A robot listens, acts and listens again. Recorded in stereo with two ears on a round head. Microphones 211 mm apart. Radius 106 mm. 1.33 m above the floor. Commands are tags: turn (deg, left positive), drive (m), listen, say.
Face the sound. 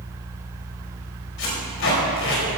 <turn deg="60"/>
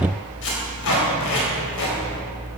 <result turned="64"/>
<turn deg="60"/>
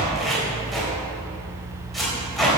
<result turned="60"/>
<say>Facing the tape being pulled.</say>